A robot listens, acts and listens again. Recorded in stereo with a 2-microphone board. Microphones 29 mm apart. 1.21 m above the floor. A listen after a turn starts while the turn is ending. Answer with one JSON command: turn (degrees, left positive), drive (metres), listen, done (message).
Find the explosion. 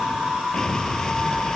{"turn": 20}
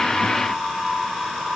{"listen": true}
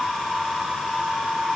{"done": "I heard an explosion, but can't make it out now. It was about straight ahead or 140° left."}